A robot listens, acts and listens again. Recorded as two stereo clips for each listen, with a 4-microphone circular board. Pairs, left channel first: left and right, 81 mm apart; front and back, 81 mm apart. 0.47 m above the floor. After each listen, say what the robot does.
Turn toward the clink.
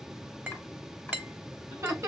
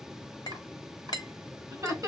Turn 25° right.
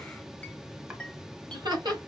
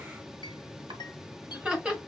Keep listening.
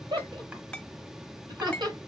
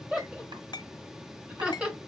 Turn 15° left.
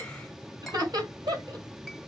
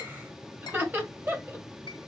Keep listening.
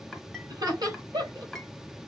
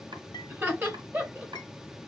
Keep listening.
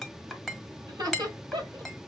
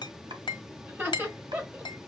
Facing the clink, 1 to 2 m away.